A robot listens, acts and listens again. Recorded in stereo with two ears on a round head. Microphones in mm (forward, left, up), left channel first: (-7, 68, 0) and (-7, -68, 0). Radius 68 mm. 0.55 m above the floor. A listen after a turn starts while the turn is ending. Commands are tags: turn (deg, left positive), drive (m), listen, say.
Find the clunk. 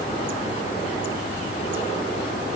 <listen/>
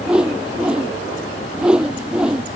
<listen/>
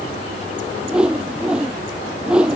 <say>I can't make out a clunk to turn to.</say>